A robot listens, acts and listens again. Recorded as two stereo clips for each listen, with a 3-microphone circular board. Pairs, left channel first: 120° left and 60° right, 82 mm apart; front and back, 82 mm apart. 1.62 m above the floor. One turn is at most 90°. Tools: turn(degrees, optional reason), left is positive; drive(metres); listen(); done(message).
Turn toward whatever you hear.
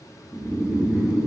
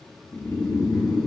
turn(degrees=20, reason="The snoring: 20° left.")
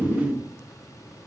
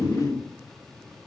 done("Found it: snoring, straight ahead, 1 to 2 m away.")